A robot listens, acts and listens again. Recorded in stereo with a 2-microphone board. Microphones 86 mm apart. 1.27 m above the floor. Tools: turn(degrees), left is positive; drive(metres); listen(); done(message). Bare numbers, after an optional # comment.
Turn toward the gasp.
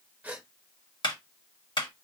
# The gasp: about 15° right or 165° right.
turn(-15)
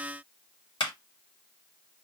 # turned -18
listen()
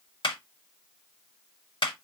done("I heard a gasp, but can't make it out now. It was about straight ahead or 145° right.")